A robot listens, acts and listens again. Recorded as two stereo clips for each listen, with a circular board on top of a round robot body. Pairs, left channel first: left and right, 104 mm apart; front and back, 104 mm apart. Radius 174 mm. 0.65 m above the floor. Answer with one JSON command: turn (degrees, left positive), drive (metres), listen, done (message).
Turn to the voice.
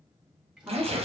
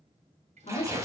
{"turn": -20}
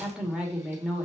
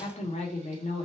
{"done": "Facing the woman speaking, 2 to 4 m away."}